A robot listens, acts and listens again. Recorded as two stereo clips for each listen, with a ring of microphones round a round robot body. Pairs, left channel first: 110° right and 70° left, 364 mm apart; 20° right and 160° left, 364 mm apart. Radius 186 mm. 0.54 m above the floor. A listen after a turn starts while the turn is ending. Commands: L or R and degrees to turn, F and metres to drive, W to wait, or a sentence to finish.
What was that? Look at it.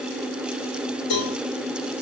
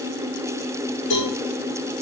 R80
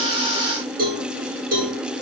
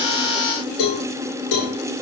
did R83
Facing the cowbell.